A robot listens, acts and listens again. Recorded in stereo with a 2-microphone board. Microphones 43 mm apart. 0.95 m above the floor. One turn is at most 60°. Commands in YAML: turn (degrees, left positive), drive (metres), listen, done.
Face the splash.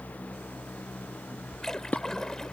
turn: 30
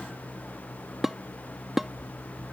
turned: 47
listen: true
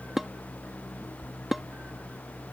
done: "I heard a splash, but can't make it out now. It was about 35° right or 120° left."